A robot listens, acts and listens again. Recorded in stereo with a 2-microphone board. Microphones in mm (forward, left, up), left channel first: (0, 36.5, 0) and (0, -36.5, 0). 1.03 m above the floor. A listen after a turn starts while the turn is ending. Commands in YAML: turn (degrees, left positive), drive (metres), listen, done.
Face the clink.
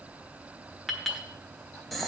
turn: 30
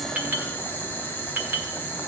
turn: -25
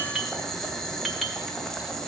listen: true
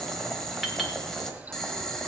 done: "Facing the clink, 1 to 2 m away."